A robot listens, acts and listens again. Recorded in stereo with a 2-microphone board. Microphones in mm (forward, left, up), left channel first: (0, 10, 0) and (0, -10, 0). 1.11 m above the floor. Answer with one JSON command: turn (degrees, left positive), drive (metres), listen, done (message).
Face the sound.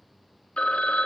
{"turn": 65}
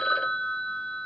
{"turn": 50}
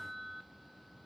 {"listen": true}
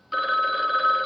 {"turn": -10}
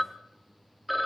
{"done": "Facing the phone ringing."}